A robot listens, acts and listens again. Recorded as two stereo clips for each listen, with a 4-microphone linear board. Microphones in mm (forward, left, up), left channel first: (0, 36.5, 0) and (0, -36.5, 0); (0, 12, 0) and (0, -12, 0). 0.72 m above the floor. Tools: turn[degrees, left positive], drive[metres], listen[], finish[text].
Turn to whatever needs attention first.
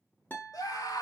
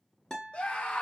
Thought: The scream: about 55° left or 125° left.
Action: turn[55]
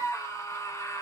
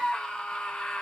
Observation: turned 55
Thought: So it is at 55° left.
Action: turn[55]
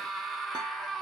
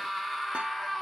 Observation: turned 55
Action: finish[Facing the scream, under 1 m away.]